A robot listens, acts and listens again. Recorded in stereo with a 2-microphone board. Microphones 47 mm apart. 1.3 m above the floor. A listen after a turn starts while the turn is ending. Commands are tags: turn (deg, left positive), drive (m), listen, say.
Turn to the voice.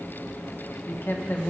<turn deg="50"/>
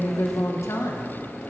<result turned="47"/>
<turn deg="80"/>
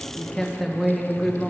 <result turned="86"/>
<say>Found it: a woman speaking, straight ahead, 1 to 2 m away.</say>